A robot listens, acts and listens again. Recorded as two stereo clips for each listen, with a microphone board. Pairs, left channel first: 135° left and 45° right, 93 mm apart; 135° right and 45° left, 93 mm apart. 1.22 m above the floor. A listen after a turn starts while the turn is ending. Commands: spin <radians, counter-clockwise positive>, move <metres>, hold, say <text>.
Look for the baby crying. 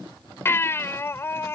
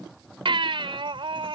spin 1.22
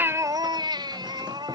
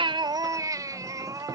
say Found it: a baby crying, straight ahead.